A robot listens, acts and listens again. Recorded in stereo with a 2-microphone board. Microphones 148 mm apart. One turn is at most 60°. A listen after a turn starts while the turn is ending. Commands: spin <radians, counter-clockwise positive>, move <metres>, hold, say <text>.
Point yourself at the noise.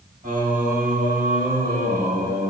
spin -1.05
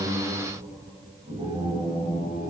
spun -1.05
spin -0.70
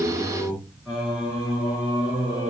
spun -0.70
spin -0.17
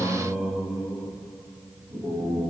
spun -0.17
say Found it: singing, straight ahead, over 4 m away.